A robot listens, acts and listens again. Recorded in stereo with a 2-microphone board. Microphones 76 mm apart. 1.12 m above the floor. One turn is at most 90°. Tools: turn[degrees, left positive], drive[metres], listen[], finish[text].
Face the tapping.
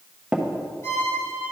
Action: turn[-30]
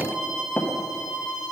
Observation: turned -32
Thought: So it is at 20° left.
Action: turn[20]
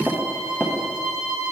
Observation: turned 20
Action: finish[Found it: tapping, straight ahead.]